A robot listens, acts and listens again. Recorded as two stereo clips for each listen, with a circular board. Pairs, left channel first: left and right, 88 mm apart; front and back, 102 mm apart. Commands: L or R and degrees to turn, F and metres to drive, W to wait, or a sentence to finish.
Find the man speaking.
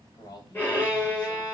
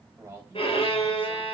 L115
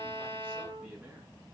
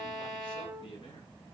R20
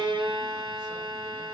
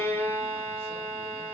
W
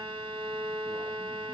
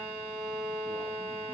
W
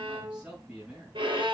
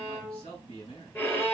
R10
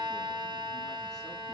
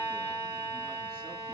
W
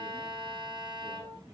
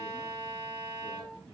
W
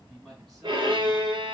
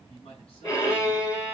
Found it: a man speaking, straight ahead, over 4 m away.